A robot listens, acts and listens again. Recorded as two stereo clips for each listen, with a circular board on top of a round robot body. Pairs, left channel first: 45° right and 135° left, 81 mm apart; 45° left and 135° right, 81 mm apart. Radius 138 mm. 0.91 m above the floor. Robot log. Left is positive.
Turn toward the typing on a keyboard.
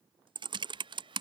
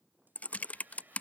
note: The typing on a keyboard: 115° left.
cmd yaw +115
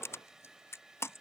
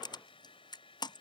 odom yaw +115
note: The typing on a keyboard is now 15° left.
cmd yaw +15
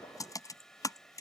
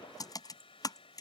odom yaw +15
end: Facing the typing on a keyboard.